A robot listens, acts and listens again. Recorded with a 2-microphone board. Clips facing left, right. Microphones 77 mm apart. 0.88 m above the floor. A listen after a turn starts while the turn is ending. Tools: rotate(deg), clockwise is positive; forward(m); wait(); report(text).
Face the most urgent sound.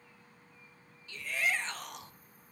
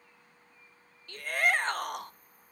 rotate(55)
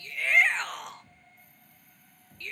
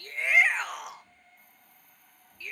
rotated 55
report("Found it: a shout, straight ahead, under 1 m away.")